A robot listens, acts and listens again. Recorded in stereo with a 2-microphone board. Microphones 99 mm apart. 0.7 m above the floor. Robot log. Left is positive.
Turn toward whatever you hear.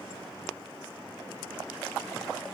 cmd idle
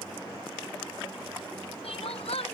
cmd yaw +90
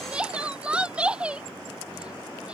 note: So it is at 10° right.
cmd yaw -10
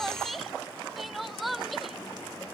end: Facing the crying.